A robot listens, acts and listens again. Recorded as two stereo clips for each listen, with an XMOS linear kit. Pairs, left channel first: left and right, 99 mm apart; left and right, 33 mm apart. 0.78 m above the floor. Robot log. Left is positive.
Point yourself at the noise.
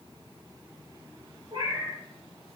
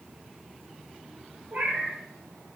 note: The cat meowing: about 60° right or 120° right.
cmd yaw -60
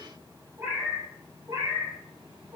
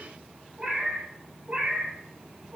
note: So it is at 40° right.
cmd yaw -40
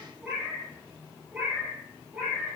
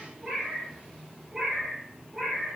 note: The cat meowing is now 15° right.
cmd yaw -15
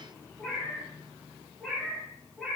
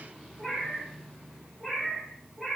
end: Facing the cat meowing, 2 to 4 m away.